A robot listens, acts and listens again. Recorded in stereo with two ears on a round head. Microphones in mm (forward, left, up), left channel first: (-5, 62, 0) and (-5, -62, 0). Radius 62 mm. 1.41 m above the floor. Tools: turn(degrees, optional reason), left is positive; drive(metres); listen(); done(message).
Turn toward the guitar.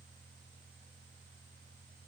listen()
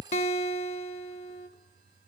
turn(degrees=50, reason="The guitar: about 50° left or 130° left.")
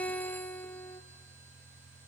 turn(degrees=10, reason="So it is at 10° left.")
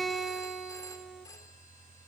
done("Found it: a guitar, straight ahead.")